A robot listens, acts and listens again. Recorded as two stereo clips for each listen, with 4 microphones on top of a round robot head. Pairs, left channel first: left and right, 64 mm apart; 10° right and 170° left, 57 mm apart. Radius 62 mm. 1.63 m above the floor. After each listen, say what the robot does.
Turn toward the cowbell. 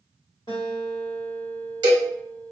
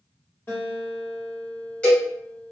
Turn 85° right.
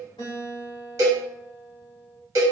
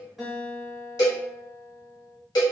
Turn 35° right.
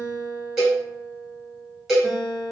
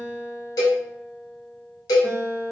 Found it: a cowbell, straight ahead.